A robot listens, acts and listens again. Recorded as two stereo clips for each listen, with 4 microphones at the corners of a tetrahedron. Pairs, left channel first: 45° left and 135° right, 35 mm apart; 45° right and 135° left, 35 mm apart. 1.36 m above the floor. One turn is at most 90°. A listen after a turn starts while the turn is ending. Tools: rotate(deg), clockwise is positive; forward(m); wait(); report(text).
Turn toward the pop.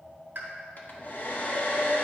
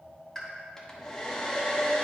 rotate(90)
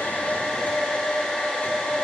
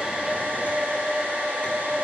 rotate(35)
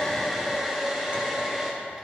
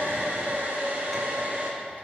report("I heard a pop from this way, but can't make it out now.")